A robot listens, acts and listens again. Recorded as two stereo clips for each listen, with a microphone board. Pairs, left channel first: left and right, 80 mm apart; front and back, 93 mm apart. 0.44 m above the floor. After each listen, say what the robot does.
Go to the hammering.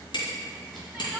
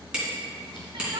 Turn 100° left.
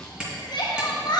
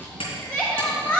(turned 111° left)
Turn 10° right.
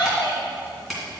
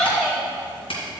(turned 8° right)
Drive 1.0 m forward.
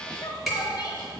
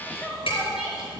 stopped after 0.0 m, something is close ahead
Blocked. The hammering is further on, straight ahead.